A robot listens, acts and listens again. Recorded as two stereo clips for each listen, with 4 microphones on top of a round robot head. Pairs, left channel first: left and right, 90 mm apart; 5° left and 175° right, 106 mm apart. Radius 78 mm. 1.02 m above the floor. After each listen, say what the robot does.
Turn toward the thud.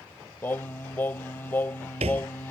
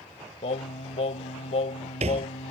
Turn 130° right.
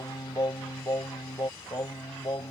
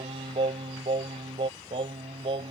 I heard a thud from this way, but can't make it out now.